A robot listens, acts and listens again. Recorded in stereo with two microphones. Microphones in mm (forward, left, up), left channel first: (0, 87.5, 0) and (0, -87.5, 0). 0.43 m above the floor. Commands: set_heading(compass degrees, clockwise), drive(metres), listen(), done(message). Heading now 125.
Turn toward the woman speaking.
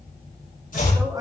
set_heading(145)
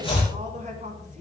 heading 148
set_heading(283)
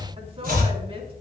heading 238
set_heading(273)
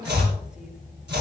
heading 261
set_heading(271)
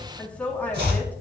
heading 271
set_heading(261)
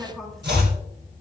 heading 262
done("Facing the woman speaking, over 4 m away.")